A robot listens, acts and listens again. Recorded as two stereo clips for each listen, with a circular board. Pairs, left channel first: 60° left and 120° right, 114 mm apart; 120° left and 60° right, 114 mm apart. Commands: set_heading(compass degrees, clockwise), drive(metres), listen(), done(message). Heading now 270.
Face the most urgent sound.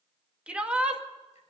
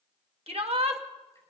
set_heading(310)
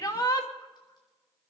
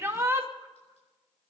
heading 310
done("Found it: a shout, straight ahead, 2 to 4 m away.")